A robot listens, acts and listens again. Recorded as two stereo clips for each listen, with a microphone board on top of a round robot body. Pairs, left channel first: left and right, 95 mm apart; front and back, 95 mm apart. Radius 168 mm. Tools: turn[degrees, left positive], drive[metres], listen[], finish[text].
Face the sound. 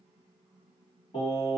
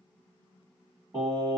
Thought: The singing: 120° left.
Action: turn[120]
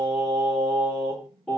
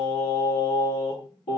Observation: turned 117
Thought: The singing is now 10° left.
Action: turn[10]
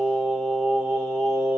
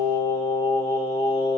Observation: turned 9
Action: finish[Found it: singing, straight ahead.]